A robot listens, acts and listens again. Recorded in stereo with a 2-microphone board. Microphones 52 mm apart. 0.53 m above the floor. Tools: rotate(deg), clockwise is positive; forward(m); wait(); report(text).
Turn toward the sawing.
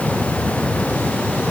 wait()
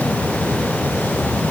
wait()
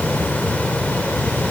report("I can't make out sawing to turn to.")